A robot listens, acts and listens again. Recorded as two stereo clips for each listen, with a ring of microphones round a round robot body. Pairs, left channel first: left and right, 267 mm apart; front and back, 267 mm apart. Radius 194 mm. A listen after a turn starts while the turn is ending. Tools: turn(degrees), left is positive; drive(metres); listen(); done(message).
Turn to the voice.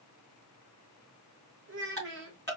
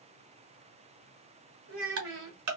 turn(degrees=-140)
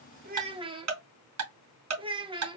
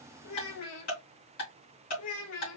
turn(degrees=-20)
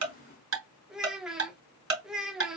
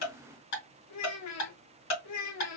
done("Facing the child speaking, 1 to 2 m away.")